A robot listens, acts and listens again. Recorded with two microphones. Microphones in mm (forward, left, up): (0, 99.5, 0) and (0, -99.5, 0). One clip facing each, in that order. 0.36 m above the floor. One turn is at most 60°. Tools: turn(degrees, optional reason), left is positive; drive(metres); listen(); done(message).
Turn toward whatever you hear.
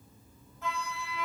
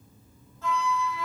turn(degrees=15, reason="The flute: about 15° left or 165° left.")
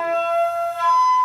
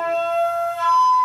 done("Facing the flute, 1 to 2 m away.")